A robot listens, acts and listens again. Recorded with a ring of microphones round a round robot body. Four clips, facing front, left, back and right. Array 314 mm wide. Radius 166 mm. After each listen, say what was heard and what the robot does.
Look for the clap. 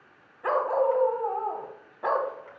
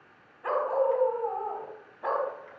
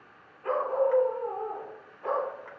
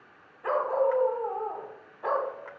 Keep listening.
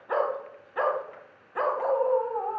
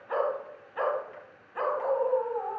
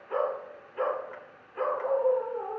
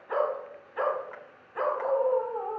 Keep listening.
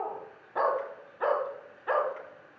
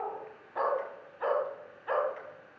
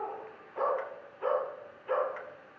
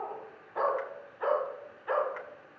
I can't make out a clap, only a dog barking.